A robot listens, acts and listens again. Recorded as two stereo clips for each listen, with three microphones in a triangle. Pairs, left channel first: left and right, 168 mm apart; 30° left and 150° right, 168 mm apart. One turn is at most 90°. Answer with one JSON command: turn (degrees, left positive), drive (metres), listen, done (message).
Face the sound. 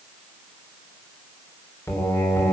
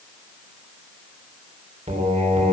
{"turn": 90}
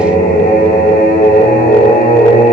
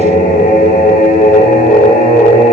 {"turn": 60}
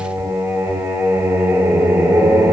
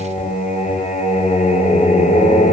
{"turn": -15}
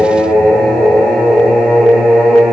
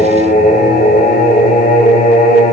{"done": "Found it: singing, straight ahead, 2 to 4 m away."}